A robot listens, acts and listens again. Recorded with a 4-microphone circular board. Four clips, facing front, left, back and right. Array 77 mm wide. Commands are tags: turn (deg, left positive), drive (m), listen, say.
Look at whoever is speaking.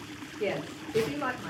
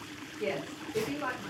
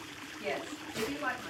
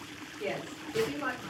<say>Facing the woman speaking, 1 to 2 m away.</say>